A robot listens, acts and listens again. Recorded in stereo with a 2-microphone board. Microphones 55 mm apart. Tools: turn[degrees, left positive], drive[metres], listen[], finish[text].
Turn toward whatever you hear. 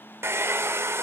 Thought: The hair dryer: about 50° right or 130° right.
Action: turn[-50]
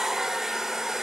Action: finish[Found it: a hair dryer, straight ahead.]